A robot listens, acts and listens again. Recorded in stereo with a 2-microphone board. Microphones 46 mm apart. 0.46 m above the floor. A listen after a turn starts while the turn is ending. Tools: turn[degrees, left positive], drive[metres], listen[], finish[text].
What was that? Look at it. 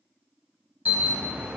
Thought: The alarm: about 30° right or 150° right.
Action: turn[-30]
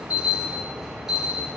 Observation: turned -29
Thought: So it is at 10° right.
Action: turn[-10]
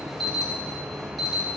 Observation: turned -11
Action: finish[Facing the alarm, 1 to 2 m away.]